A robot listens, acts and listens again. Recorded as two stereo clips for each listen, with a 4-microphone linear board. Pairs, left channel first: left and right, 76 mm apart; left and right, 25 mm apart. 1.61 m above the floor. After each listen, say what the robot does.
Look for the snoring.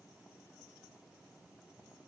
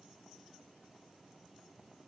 Keep listening.
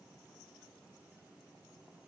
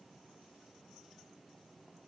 Keep listening.
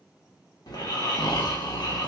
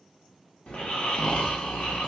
Turn 65° left.
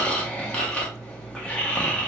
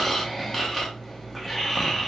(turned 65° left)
Turn 20° left.
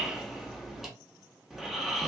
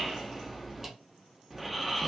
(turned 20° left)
Facing the snoring.